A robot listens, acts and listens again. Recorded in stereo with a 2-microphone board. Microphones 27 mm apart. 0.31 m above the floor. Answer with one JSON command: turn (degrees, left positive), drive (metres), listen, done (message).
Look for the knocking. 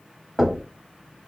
{"turn": 30}
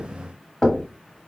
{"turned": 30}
{"turn": 155}
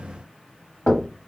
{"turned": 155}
{"turn": 70}
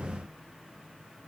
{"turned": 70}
{"listen": true}
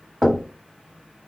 {"done": "Facing the knocking."}